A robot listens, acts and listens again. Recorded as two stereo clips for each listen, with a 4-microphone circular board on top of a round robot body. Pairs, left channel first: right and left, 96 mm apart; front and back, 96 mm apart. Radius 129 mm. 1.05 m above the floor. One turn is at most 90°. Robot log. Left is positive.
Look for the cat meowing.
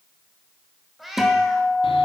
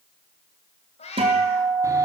end: Facing the cat meowing.